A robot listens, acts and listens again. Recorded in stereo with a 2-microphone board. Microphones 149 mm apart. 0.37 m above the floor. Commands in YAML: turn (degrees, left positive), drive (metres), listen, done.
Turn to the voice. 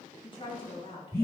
turn: 35
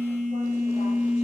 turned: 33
listen: true
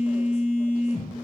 listen: true
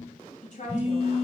turn: 105
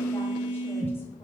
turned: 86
turn: 20
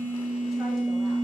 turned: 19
listen: true
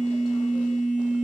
done: "I heard a woman speaking from this way, but can't make it out now."